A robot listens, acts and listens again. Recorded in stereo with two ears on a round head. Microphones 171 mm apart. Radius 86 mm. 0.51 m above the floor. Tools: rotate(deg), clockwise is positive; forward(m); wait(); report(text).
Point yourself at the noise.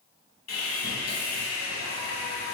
rotate(-50)
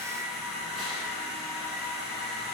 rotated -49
report("Facing the sawing, 1 to 2 m away.")